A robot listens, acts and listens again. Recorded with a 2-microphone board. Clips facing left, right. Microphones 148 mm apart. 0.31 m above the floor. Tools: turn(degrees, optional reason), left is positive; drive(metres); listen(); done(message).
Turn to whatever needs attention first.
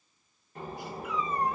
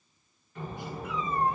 listen()
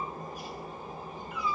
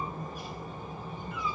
listen()
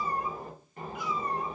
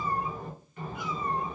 done("I can't make out anything urgent to turn to.")